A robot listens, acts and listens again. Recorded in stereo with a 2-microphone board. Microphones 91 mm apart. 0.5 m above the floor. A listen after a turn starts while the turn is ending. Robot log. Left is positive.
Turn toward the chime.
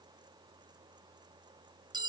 cmd idle
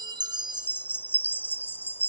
note: The chime: about 20° left or 160° left.
cmd yaw +20
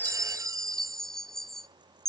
end: Facing the chime, under 1 m away.